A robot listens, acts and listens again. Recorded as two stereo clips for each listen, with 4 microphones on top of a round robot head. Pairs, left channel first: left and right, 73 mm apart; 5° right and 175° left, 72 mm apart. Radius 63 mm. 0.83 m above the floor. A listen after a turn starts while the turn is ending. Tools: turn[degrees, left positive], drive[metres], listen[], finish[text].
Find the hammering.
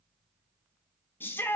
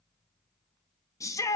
Action: listen[]
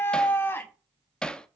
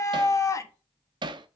Thought: The hammering: 170° left.
Action: turn[170]
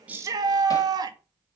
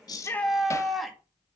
Action: listen[]
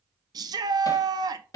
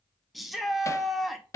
Thought: The hammering is now 45° left.
Action: turn[45]
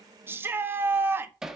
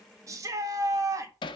Action: finish[Facing the hammering.]